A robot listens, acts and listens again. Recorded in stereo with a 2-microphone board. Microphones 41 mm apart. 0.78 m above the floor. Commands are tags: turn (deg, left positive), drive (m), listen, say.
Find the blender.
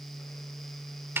<listen/>
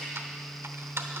<listen/>
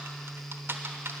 <say>I can't make out a blender, only typing on a keyboard.</say>